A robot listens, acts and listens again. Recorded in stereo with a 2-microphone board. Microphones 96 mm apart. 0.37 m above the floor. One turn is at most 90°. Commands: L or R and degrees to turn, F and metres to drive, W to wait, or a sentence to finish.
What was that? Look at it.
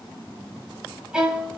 R30
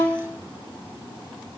L20
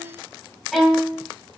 Facing the violin, 1 to 2 m away.